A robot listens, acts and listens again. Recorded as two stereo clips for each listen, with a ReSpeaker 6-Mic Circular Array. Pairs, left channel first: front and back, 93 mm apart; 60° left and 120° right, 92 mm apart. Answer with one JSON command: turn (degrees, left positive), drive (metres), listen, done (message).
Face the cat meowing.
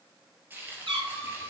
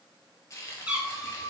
{"turn": 155}
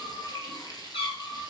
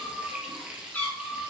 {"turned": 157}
{"turn": -15}
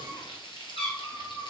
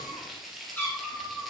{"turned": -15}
{"turn": -10}
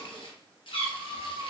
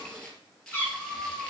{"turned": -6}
{"turn": -10}
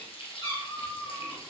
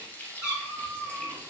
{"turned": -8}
{"done": "Found it: a cat meowing, straight ahead, 2 to 4 m away."}